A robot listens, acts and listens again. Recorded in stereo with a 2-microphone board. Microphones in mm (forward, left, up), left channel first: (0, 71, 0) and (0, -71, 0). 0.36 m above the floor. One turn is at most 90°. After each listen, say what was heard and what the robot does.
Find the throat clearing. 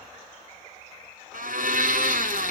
Keep listening.
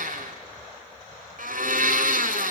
Keep listening.
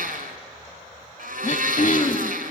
The throat clearing: about 60° left or 120° left. Turn 60° left.
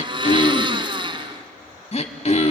So it is at 55° left. Turn 55° left.
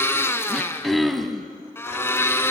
Found it: throat clearing, straight ahead, 1 to 2 m away.